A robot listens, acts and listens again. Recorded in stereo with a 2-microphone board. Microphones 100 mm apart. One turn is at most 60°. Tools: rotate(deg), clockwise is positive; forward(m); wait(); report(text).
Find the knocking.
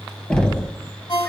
rotate(-30)
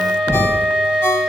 rotate(-60)
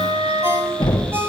rotate(-60)
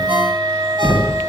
rotate(-15)
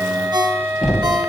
report("Found it: knocking, straight ahead, 1 to 2 m away.")